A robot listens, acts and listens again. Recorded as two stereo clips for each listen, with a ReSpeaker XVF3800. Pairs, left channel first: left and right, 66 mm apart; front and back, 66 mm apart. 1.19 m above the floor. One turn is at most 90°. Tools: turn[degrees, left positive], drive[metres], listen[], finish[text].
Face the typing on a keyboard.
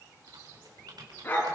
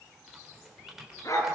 Thought: The typing on a keyboard: 95° right.
Action: turn[-90]
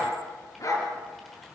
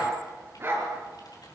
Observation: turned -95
Action: listen[]
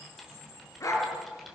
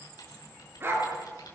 Action: finish[Found it: typing on a keyboard, straight ahead.]